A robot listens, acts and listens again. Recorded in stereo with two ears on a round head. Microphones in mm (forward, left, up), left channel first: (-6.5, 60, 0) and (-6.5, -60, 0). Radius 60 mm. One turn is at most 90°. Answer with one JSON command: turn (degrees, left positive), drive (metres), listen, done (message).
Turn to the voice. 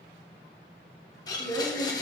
{"turn": 35}
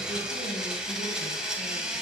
{"listen": true}
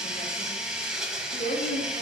{"turn": 90}
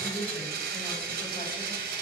{"turn": 20}
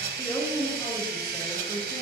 {"turn": 20}
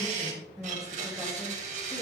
{"done": "Found it: a woman speaking, straight ahead."}